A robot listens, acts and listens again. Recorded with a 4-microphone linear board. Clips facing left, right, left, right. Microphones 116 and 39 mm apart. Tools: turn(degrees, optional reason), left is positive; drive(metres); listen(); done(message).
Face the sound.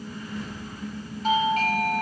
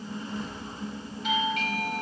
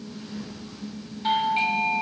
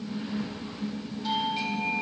turn(degrees=40, reason="The doorbell: about 40° left or 140° left.")
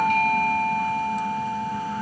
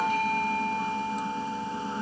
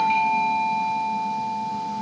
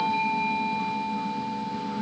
turn(degrees=95, reason="So it is at 95° left.")
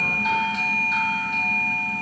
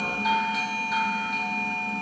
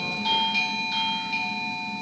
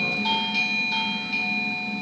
done("Facing the doorbell.")